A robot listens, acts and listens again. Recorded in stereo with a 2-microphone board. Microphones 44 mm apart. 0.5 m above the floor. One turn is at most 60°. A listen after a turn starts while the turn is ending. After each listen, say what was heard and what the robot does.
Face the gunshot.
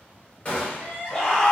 The gunshot: about 30° left or 150° left. Turn 30° left.
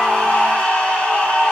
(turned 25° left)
Keep listening.
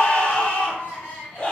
I heard a gunshot, but can't make it out now. It was about 5° left or 125° left.